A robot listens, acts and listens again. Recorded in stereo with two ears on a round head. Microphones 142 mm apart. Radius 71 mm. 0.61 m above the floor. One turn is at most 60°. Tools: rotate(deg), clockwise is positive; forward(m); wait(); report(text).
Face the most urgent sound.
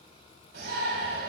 rotate(60)
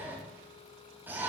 rotate(15)
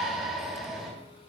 report("Found it: a shout, straight ahead.")